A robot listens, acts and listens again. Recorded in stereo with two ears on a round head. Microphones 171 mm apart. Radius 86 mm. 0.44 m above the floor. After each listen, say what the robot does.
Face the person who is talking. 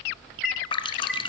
Keep listening.
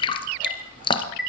Keep listening.
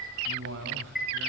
Turn 65° right.
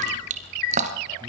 Keep listening.
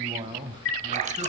Turn 25° right.
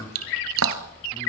Turn 20° left.
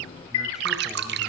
Keep listening.
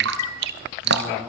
Keep listening.
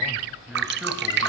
Found it: a man speaking, straight ahead.